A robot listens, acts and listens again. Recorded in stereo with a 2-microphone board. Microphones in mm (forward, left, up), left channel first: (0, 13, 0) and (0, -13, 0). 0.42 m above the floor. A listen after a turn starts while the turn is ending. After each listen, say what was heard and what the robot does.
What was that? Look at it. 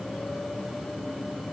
Keep listening.
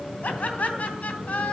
The laughter: about 65° left or 115° left. Turn 65° left.
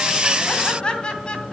So it is at 35° left. Turn 35° left.
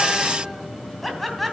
Facing the laughter.